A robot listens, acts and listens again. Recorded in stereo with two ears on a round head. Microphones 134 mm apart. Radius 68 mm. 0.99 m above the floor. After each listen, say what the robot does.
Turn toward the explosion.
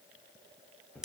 Keep listening.
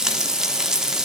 Keep listening.
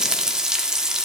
I can't make out an explosion, only frying.